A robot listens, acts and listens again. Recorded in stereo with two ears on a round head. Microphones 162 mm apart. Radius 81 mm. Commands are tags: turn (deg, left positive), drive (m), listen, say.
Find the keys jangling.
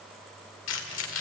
<turn deg="90"/>
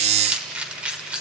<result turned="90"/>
<say>Facing the keys jangling.</say>